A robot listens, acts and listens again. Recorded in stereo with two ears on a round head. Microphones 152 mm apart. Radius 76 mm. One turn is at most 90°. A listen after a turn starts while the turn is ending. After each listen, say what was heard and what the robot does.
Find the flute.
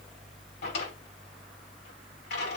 Keep listening.
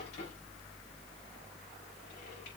Keep listening.
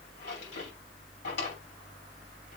I can't make out a flute, only a drawer.